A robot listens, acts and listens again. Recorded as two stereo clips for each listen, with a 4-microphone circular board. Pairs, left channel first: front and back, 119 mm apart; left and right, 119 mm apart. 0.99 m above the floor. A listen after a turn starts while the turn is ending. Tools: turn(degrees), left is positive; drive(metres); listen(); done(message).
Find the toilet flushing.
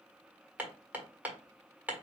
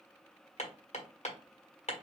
listen()
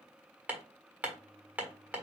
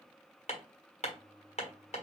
turn(degrees=-105)
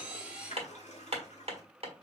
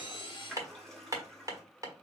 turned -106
done("Facing the toilet flushing, 1 to 2 m away.")